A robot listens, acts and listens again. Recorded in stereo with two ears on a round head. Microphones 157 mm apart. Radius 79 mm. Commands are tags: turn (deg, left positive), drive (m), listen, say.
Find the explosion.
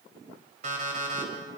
<listen/>
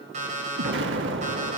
<turn deg="-90"/>
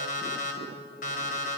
<say>Facing where the explosion came from. I can't hear it now.</say>